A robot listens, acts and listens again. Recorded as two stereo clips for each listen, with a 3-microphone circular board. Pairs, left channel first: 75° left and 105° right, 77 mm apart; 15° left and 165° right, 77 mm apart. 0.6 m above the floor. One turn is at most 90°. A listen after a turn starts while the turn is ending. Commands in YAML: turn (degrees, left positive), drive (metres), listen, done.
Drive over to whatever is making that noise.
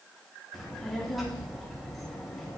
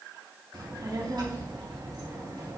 turn: 90
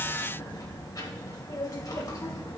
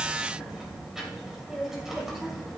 turn: 90
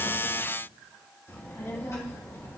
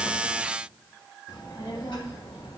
turn: 20
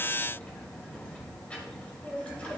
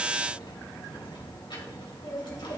drive: 1.0
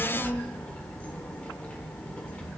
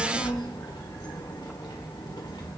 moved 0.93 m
drive: 1.0
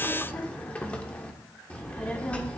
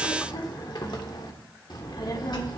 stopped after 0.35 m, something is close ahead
done: "I am next to the child speaking."